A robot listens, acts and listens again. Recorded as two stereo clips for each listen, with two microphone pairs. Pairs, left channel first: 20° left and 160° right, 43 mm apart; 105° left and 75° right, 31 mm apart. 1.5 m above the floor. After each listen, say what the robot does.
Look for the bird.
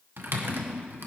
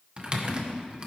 Keep listening.
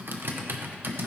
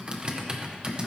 Keep listening.
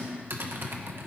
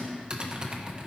I can't make out a bird, only typing on a keyboard.